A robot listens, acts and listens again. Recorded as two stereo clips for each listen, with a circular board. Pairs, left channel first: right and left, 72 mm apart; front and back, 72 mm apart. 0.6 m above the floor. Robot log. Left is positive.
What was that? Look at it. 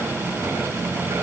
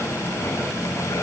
cmd idle
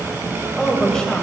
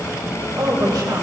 note: The woman speaking: 170° right.
cmd yaw -170
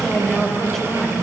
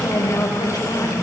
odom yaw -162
end: Facing the woman speaking, 2 to 4 m away.